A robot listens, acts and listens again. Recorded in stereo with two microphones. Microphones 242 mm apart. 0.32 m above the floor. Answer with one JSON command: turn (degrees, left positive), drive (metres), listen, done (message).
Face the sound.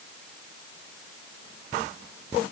{"listen": true}
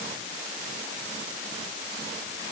{"listen": true}
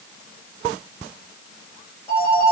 {"turn": 30}
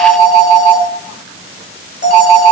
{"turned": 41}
{"turn": 125}
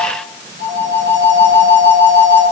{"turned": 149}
{"turn": -20}
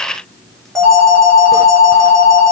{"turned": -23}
{"done": "Found it: a phone ringing, straight ahead."}